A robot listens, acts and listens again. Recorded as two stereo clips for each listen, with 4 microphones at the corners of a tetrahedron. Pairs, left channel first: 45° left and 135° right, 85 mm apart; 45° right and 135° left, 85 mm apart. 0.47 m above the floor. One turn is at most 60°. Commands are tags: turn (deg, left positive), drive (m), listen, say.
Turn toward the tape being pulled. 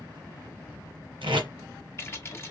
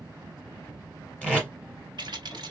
<turn deg="-60"/>
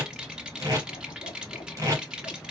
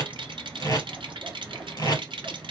<turn deg="-60"/>
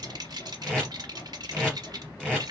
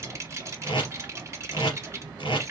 <turn deg="-35"/>
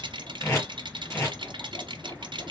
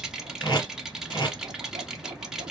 <turn deg="-10"/>
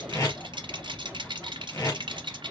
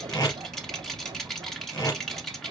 <say>Found it: tape being pulled, straight ahead, 2 to 4 m away.</say>